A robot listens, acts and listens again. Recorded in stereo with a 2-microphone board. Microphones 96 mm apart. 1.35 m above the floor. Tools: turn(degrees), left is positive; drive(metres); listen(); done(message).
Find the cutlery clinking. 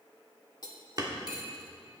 turn(degrees=45)
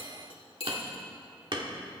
turn(degrees=85)
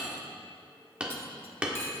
listen()
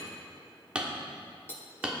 turn(degrees=25)
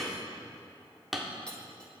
listen()
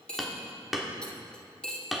turn(degrees=10)
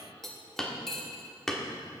done("Found it: cutlery clinking, straight ahead, 1 to 2 m away.")